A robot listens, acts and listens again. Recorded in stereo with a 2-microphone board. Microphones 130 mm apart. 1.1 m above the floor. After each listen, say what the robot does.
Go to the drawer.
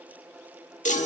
Keep listening.
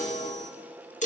Keep listening.
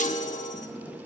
Turn 30° left.
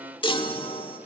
Keep listening.
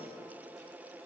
Keep listening.
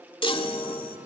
I heard a drawer, but can't make it out now. It was about straight ahead or 120° left. I did not reach it.